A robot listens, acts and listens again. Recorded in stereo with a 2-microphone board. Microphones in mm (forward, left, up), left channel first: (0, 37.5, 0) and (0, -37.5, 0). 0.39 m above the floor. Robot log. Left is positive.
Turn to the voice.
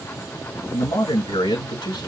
cmd yaw +90
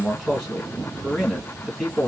end: Found it: a man speaking, straight ahead, 2 to 4 m away.